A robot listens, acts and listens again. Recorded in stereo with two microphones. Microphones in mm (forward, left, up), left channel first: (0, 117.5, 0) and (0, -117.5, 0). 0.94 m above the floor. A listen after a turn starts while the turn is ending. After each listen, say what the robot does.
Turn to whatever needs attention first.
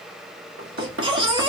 Turn 20° right.
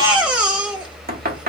Facing the baby crying, 1 to 2 m away.